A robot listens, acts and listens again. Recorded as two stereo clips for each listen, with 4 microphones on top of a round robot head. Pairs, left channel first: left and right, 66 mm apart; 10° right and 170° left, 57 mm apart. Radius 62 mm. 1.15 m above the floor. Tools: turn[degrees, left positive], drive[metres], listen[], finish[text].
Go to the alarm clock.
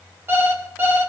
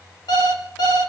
Thought: The alarm clock: 25° right.
Action: turn[-25]
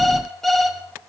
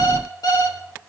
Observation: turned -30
Action: drive[1.0]
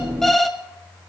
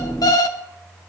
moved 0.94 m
Action: drive[1.0]
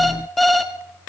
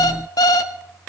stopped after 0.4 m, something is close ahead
Action: finish[Arrived at the alarm clock, straight ahead.]